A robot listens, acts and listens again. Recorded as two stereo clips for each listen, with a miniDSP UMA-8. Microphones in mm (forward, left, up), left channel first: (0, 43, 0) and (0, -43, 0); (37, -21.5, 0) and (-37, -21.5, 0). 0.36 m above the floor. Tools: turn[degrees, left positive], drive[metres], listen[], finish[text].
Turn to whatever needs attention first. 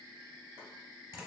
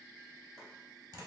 Action: listen[]
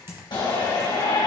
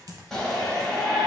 Thought: The shout: 80° left.
Action: turn[80]
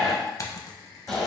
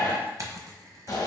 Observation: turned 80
Action: finish[Found it: a shout, straight ahead, 1 to 2 m away.]